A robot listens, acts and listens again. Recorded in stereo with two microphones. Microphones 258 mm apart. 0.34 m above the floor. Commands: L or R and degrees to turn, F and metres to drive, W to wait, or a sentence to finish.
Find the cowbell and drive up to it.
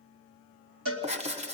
R55
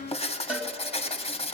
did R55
F1.0
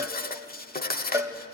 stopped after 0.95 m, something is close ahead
R15
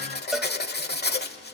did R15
Arrived at the cowbell, straight ahead.